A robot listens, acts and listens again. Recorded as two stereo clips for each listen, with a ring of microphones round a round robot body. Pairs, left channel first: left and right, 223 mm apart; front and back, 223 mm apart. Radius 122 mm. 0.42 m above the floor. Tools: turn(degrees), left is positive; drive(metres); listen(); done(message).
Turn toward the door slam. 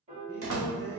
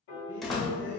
turn(degrees=-90)
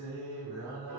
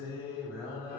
done("I heard a door slam from this way, but can't make it out now.")